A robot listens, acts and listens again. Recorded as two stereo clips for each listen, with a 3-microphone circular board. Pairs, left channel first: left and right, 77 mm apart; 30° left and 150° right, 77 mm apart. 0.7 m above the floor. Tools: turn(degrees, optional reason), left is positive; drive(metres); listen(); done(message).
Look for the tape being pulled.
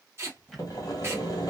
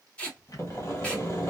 turn(degrees=-40, reason="The tape being pulled: 40° right.")
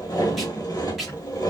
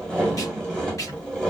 done("Facing the tape being pulled.")